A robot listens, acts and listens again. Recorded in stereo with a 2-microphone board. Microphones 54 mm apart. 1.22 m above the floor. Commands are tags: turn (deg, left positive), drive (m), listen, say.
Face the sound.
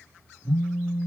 <turn deg="75"/>
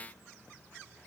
<listen/>
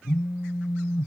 <say>Found it: a phone buzzing, straight ahead.</say>